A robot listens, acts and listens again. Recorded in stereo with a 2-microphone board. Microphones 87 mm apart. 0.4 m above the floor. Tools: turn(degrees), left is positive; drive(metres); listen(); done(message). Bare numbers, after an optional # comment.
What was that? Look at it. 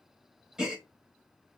turn(-30)
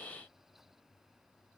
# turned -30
listen()
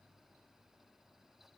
done("I heard a gasp, but can't make it out now. It was about 20° left or 140° right.")